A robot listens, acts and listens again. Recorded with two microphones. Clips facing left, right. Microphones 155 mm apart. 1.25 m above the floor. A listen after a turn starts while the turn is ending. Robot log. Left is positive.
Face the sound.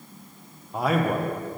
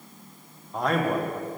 cmd yaw +30
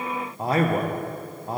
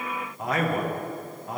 note: So it is at 145° left.
cmd yaw +145
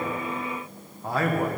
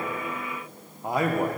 note: The man speaking is now 20° right.
cmd yaw -20
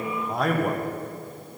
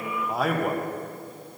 end: Found it: a man speaking, straight ahead.